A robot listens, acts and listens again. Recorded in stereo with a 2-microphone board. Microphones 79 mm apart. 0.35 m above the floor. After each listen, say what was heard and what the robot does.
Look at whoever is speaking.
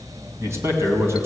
The man speaking: about 35° right or 145° right. Turn 35° right.
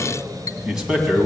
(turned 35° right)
So it is at 10° right. Turn 10° right.
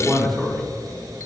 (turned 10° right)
Found it: a man speaking, straight ahead.